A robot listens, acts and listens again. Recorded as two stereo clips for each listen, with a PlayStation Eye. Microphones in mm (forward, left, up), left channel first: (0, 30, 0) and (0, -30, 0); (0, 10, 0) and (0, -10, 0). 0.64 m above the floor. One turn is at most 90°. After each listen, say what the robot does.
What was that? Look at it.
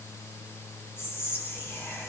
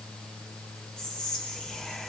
Turn 40° left.
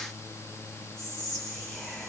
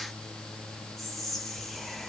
Turn 10° left.
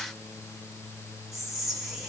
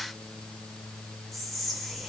Found it: whispering, straight ahead, under 1 m away.